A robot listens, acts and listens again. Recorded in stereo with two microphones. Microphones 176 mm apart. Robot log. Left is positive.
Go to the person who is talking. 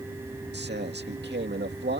cmd yaw -90
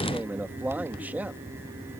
note: So it is at 10° right.
cmd yaw -10
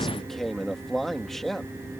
cmd fwd 1.0
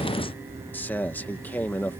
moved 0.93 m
note: The man speaking is now 10° left.
cmd yaw +10
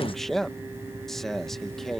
cmd fwd 1.0
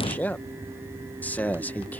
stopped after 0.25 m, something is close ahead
note: The man speaking is now 10° left.
cmd yaw +10
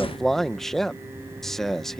end: I am next to the man speaking.